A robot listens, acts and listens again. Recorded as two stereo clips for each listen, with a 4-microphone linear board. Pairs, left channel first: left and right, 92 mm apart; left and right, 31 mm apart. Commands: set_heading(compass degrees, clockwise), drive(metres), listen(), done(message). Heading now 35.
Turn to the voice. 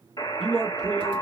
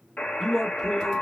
set_heading(65)
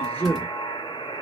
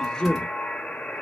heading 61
set_heading(41)
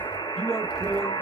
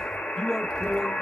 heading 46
done("Found it: a man speaking, straight ahead.")